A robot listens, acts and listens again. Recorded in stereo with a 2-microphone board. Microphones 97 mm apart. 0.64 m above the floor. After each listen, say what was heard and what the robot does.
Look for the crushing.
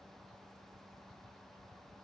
Keep listening.
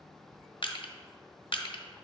The crushing: about 60° left or 120° left. Turn 60° left.
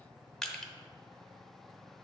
Found it: crushing, straight ahead.